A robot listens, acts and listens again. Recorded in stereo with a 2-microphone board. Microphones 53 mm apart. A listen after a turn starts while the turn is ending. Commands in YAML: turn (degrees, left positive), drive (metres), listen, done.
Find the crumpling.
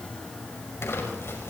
turn: 60
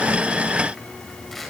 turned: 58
listen: true
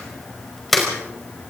done: "Found it: crumpling, straight ahead, over 4 m away."